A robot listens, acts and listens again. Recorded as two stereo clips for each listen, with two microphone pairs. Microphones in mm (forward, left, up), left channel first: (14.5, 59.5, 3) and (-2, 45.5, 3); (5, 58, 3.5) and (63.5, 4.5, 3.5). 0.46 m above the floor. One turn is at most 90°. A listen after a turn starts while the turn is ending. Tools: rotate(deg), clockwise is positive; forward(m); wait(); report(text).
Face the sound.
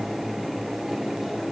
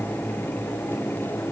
wait()
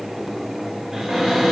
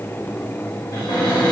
rotate(-90)
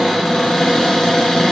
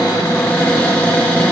rotate(-75)
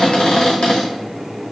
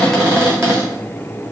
rotate(-15)
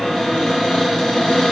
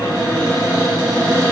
report("Found it: a cupboard door, straight ahead, under 1 m away.")